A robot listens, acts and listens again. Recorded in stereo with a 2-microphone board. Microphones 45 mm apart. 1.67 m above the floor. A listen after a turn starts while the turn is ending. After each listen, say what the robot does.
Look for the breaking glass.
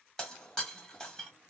Turn 30° left.
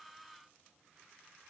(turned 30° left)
Keep listening.
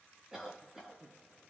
I heard breaking glass, but can't make it out now. It was about 20° right or 140° left.